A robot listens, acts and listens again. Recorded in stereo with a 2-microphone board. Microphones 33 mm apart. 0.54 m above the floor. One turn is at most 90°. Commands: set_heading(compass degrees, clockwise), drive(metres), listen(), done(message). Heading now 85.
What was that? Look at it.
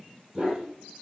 set_heading(115)
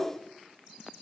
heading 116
listen()
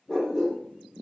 set_heading(91)
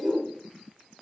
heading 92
done("Found it: a dog barking, straight ahead.")